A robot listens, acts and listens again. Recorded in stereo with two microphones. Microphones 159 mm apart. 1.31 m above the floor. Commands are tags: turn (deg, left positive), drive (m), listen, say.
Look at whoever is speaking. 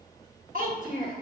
<turn deg="-60"/>
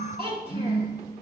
<turn deg="-35"/>
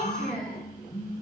<say>Found it: a child speaking, straight ahead.</say>